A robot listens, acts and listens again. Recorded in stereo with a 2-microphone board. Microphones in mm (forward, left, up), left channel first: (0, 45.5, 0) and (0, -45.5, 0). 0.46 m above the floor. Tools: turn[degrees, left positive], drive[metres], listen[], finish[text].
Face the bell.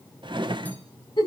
Action: listen[]
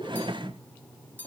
Thought: The bell: about 20° left or 160° left.
Action: turn[20]
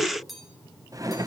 Action: finish[Facing the bell, 2 to 4 m away.]